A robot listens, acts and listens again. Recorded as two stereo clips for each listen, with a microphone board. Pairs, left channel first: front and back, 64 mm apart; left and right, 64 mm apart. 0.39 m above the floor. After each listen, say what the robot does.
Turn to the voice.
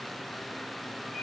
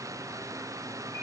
Keep listening.
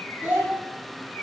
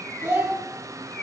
Turn 125° right.
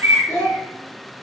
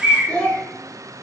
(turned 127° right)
Turn 25° left.
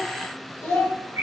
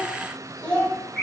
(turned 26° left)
Turn 35° left.
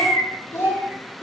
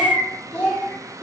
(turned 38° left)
Turn 20° left.
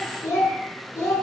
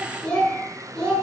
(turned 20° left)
Found it: a child speaking, straight ahead.